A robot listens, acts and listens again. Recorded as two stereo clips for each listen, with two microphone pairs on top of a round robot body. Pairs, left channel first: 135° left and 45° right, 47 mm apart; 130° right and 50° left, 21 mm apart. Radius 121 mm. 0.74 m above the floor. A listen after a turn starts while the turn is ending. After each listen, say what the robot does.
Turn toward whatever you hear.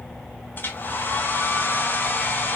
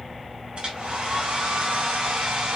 Turn 95° left.
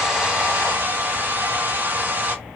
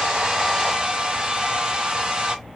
Turn 10° left.
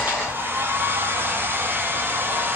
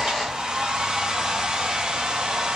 Facing the hair dryer, 1 to 2 m away.